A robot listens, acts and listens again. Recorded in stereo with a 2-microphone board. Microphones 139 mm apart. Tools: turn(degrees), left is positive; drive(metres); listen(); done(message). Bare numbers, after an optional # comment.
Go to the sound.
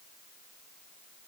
listen()
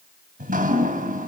turn(-90)
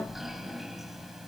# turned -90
drive(1.0)
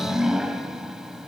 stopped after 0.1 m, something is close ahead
done("Something is in my way. I am facing the dripping but have not reached it.")